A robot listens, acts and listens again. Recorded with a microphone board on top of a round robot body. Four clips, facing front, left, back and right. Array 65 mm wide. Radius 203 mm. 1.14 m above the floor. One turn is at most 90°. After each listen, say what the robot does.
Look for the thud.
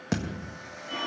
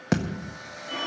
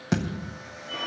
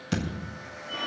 Turn 90° left.
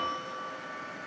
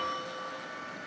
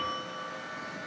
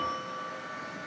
Facing where the thud came from. I can't hear it now.